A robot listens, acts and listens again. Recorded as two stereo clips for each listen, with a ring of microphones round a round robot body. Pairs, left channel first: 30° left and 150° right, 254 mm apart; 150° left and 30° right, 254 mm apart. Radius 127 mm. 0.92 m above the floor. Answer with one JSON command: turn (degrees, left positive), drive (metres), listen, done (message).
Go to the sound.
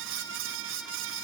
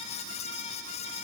{"listen": true}
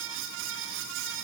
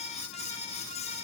{"listen": true}
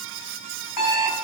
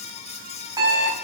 {"turn": 45}
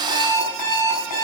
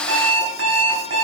{"turn": 10}
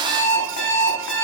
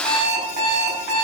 {"drive": 1.0}
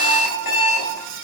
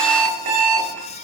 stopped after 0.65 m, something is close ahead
{"done": "Blocked. The alarm clock is further on, straight ahead."}